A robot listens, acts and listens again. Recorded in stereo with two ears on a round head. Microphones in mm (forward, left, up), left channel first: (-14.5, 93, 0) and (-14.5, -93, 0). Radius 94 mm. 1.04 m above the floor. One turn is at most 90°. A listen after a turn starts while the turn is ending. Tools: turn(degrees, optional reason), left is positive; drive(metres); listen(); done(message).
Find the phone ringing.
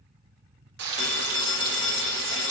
turn(degrees=20, reason="The phone ringing: about 20° left or 160° left.")
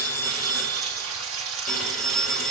done("Facing the phone ringing, 1 to 2 m away.")